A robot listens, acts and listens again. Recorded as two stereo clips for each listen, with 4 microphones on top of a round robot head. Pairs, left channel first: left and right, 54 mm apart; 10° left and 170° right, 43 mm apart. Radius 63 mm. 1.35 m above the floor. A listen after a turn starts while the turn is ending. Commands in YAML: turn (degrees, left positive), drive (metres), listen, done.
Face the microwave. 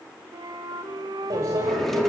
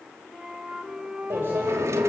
turn: -125
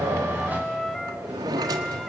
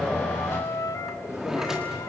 listen: true
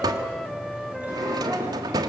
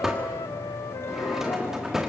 listen: true
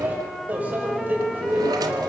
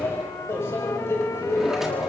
turn: -25
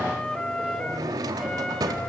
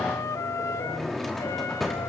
listen: true
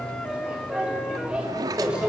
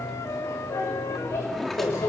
turn: -15
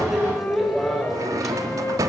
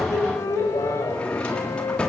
done: "Facing the microwave."